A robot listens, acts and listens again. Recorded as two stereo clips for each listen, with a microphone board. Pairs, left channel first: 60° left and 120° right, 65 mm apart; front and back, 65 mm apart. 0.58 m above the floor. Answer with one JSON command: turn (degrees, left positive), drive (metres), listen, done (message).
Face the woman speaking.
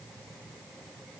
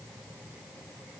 {"listen": true}
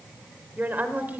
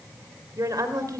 {"turn": 180}
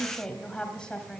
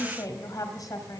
{"turn": -15}
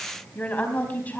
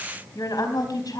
{"done": "Found it: a woman speaking, straight ahead."}